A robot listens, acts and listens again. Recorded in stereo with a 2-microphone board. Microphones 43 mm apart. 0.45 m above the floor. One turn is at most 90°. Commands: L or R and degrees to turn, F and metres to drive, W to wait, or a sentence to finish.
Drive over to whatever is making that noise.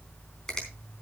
L30
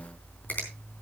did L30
L90
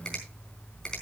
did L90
L20
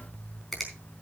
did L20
F1.0
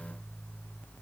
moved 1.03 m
W
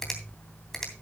L10
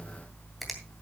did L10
F1.0
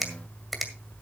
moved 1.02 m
F1.0
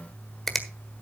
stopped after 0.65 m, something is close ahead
Arrived at the finger snap, straight ahead.